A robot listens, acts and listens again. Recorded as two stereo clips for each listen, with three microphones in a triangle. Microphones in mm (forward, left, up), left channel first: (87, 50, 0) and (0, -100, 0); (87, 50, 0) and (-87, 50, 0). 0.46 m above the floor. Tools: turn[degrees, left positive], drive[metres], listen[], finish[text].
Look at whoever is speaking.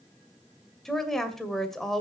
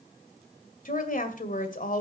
Thought: The woman speaking: 25° right.
Action: turn[-25]
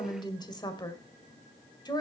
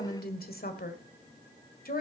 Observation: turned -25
Action: finish[Facing the woman speaking, 1 to 2 m away.]